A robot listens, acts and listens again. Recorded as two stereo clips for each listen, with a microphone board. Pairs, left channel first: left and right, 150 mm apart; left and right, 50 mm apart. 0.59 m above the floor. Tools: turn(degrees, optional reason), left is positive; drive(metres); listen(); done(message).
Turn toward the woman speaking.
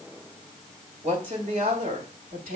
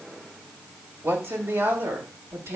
turn(degrees=-70, reason="The woman speaking: about 70° right or 110° right.")
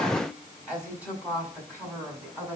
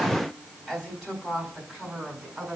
turn(degrees=-10, reason="So it is at 10° right.")
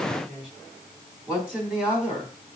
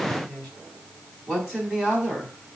done("Facing the woman speaking.")